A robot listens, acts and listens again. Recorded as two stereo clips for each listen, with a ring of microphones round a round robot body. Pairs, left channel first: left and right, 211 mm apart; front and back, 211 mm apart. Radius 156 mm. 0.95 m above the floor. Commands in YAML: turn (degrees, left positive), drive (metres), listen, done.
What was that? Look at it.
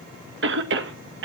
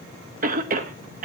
turn: -125
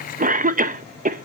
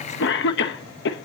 turn: -40
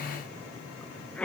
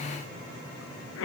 done: "Facing the cough, under 1 m away."